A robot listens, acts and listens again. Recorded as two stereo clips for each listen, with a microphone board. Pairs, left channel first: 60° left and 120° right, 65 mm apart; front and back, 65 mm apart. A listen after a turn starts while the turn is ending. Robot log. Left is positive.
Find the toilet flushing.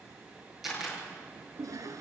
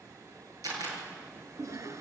note: The toilet flushing: 145° right.
cmd yaw -145
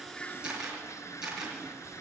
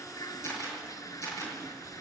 note: The toilet flushing is now 25° left.
cmd yaw +25
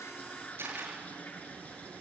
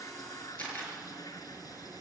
end: Facing the toilet flushing, 1 to 2 m away.